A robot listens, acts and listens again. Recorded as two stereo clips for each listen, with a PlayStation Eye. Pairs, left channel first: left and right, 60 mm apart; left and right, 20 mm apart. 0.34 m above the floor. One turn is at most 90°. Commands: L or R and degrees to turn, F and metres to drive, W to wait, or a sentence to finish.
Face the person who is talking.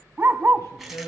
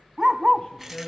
L70
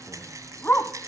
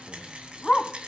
W
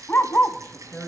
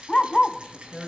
L10
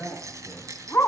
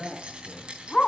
Facing the man speaking.